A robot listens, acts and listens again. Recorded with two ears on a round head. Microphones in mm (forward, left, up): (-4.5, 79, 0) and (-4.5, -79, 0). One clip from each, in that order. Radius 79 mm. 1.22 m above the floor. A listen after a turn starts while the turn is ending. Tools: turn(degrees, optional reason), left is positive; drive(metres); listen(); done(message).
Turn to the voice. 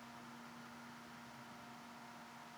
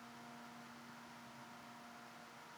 listen()
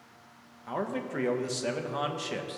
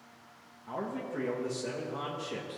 turn(degrees=65, reason="The man speaking: about 65° left or 115° left.")
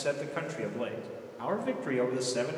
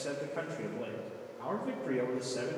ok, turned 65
turn(degrees=50, reason="So it is at 50° left.")
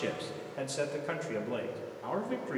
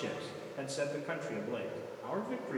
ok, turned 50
turn(degrees=15, reason="The man speaking is now 15° left.")
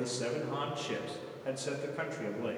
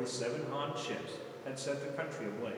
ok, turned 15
done("Found it: a man speaking, straight ahead.")